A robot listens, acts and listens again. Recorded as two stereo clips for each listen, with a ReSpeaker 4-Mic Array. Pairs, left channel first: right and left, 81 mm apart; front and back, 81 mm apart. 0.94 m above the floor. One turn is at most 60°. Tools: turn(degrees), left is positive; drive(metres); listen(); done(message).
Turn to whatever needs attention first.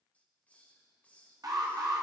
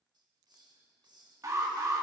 turn(degrees=60)
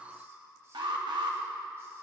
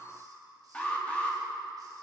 turn(degrees=60)
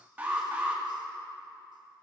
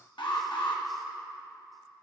turn(degrees=20)
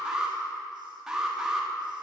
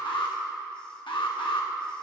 turn(degrees=10)
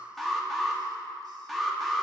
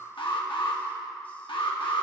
done("Facing the alarm, under 1 m away.")